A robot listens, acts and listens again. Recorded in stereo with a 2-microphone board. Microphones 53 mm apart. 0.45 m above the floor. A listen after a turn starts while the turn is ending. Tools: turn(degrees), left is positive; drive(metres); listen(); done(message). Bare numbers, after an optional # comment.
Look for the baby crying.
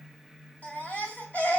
# The baby crying: about 30° left or 150° left.
turn(30)
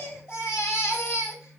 # So it is at 115° left.
turn(115)
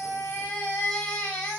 # The baby crying is now 20° left.
turn(20)
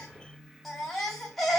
done("Facing the baby crying.")